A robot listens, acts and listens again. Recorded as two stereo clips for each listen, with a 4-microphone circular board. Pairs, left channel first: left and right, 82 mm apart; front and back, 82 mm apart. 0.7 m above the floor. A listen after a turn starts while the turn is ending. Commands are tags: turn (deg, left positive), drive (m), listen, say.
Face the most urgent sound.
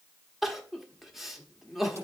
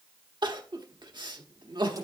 <turn deg="-175"/>
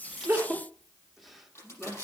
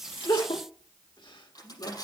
<say>Facing the crying, 1 to 2 m away.</say>